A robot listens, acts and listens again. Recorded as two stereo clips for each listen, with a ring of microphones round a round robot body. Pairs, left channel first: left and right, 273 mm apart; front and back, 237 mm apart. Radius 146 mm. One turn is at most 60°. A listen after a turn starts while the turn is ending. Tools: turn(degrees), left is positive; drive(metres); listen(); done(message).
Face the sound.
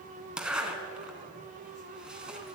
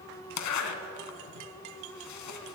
done("Facing the zipper.")